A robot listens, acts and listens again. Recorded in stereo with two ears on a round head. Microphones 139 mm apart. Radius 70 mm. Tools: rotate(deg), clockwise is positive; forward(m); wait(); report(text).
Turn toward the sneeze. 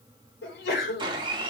rotate(-90)
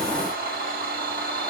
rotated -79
rotate(-10)
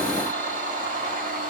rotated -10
report("I heard a sneeze from this way, but can't make it out now.")